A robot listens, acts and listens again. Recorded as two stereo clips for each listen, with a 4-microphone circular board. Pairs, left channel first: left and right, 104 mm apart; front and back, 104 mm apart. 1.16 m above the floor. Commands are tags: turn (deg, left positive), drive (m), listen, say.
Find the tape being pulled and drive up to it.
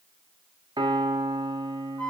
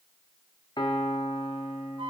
<listen/>
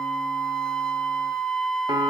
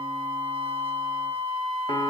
<listen/>
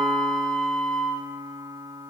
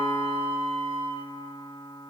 <say>I can't make out tape being pulled, only a piano and a flute.</say>